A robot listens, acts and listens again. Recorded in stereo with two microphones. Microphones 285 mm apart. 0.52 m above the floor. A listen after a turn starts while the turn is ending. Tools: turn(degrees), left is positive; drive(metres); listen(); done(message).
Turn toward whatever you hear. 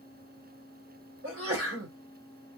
turn(degrees=-55)
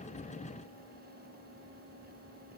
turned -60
listen()
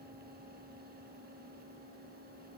done("I heard a sneeze, but can't make it out now. It was about 5° left or 65° right.")